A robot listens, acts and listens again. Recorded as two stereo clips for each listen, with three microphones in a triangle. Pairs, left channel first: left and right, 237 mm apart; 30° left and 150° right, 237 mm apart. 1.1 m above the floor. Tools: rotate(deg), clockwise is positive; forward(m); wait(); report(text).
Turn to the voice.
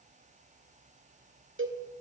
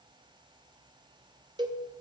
wait()
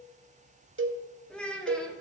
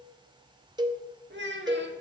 rotate(-175)
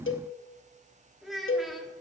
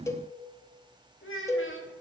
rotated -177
report("Found it: a child speaking, straight ahead.")